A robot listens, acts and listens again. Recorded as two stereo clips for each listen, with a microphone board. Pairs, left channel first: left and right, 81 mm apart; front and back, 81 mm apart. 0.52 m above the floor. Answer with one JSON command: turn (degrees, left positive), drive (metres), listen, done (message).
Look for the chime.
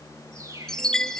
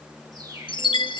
{"done": "Facing the chime."}